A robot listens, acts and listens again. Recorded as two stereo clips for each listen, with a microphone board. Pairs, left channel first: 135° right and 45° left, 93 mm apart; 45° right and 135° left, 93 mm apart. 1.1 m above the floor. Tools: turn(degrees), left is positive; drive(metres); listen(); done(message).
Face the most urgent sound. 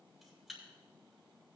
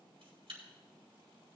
listen()
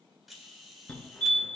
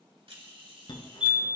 turn(degrees=-60)
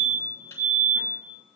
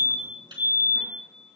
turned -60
turn(degrees=-25)
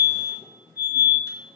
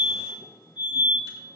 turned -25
turn(degrees=-20)
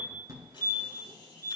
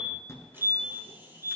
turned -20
done("Found it: a fire alarm, straight ahead, 2 to 4 m away.")